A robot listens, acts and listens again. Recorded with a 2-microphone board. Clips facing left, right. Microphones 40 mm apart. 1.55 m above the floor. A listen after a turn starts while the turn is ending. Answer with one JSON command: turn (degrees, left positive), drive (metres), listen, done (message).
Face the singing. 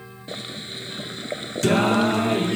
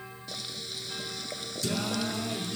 {"turn": 70}
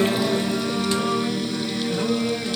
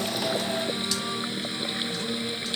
{"turn": 30}
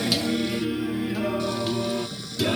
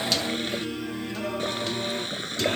{"done": "Found it: singing, straight ahead."}